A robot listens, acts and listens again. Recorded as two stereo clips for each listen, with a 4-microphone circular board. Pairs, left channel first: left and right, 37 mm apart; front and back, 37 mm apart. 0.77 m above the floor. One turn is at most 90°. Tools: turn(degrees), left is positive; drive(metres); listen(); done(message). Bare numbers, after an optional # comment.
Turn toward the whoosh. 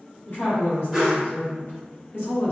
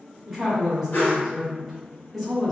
done("Found it: a whoosh, straight ahead, 1 to 2 m away.")